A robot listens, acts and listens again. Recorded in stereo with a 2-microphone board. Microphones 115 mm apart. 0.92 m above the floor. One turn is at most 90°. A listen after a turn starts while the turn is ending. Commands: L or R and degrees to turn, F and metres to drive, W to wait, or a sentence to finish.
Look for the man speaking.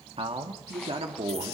R65
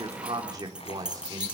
R35
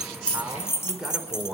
Found it: a man speaking, straight ahead, over 4 m away.